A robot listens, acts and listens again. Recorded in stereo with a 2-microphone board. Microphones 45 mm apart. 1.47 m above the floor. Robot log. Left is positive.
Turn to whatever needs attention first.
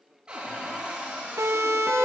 cmd yaw -90
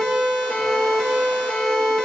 note: So it is at 15° left.
cmd yaw +15
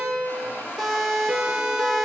end: Facing the siren, 2 to 4 m away.